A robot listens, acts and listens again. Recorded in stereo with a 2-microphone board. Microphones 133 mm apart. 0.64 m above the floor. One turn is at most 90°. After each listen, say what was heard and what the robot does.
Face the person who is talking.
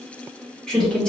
Turn 30° left.
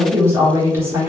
So it is at 25° right. Turn 25° right.
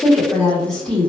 Found it: a woman speaking, straight ahead, 1 to 2 m away.